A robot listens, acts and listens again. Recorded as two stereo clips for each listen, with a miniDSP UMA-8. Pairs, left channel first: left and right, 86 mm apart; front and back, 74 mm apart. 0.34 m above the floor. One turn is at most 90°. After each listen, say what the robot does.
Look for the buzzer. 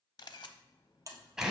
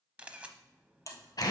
Turn 40° right.
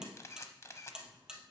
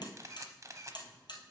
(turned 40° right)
Turn 10° right.
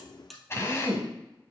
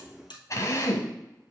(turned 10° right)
Facing the buzzer, 1 to 2 m away.